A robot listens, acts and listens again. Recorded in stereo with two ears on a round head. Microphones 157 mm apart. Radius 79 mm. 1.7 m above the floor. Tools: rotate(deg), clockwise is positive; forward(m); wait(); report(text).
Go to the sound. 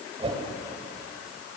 rotate(35)
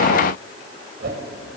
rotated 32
rotate(110)
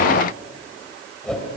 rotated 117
forward(1.0)
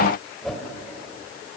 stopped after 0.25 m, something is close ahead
report("Something is in my way. I am facing the whoosh but have not reached it.")